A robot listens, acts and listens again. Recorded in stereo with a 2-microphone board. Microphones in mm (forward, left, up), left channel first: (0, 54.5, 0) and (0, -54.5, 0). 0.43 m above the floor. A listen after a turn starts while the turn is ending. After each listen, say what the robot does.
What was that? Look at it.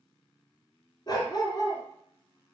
Turn 45° left.
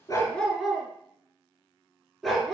Found it: a dog barking, straight ahead.